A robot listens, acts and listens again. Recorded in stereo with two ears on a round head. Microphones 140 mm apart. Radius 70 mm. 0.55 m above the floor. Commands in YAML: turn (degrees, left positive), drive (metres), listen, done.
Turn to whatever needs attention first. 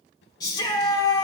turn: 25
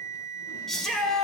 done: "Found it: a shout, straight ahead, 1 to 2 m away."